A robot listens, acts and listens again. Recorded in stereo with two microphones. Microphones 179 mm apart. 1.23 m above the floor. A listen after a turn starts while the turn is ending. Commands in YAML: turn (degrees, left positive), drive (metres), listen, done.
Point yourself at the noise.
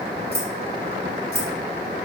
turn: -60
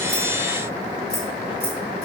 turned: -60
listen: true
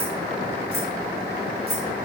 listen: true
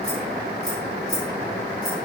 done: "I heard keys jangling, but can't make it out now. It was about straight ahead or 60° right."